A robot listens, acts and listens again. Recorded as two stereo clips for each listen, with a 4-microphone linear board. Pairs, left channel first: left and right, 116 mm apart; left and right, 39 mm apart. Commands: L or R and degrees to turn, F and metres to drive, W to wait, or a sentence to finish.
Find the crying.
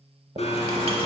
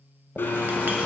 W
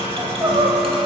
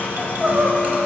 R45
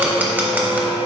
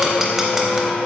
W
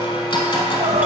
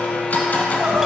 R95
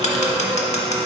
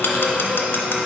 W
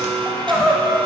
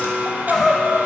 Facing the crying, under 1 m away.